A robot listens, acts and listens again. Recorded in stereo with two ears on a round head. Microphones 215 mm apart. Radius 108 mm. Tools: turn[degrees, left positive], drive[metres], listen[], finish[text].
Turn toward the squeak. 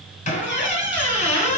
Thought: The squeak: about 30° left or 150° left.
Action: turn[30]
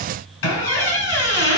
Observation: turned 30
Thought: So it is at 120° left.
Action: turn[120]
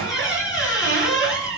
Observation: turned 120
Thought: The squeak is now 15° left.
Action: turn[15]
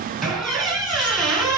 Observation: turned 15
Action: finish[Facing the squeak.]